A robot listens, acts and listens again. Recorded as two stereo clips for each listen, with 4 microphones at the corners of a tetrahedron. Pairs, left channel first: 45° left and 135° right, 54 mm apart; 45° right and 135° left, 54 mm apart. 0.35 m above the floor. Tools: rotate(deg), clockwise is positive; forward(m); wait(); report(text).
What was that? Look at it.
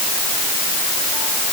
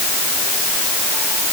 wait()
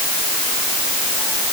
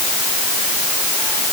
wait()
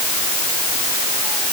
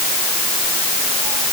report("I can't make out anything to turn to.")